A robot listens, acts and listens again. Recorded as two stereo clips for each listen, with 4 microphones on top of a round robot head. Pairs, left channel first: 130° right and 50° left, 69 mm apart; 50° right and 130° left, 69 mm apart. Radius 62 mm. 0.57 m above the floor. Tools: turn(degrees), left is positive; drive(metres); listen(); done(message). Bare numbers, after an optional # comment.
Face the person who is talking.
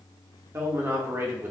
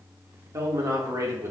# The man speaking: 95° left.
turn(95)
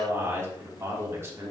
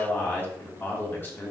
done("Facing the man speaking.")